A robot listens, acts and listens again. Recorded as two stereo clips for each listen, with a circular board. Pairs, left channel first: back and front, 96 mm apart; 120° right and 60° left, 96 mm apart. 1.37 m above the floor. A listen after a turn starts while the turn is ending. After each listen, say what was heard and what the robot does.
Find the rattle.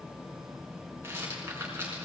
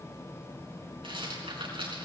The rattle: 60° left. Turn 60° left.
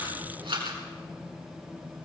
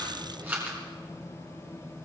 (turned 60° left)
The rattle is now 10° right. Turn 10° right.
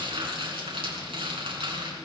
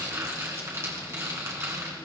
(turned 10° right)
Found it: a rattle, straight ahead.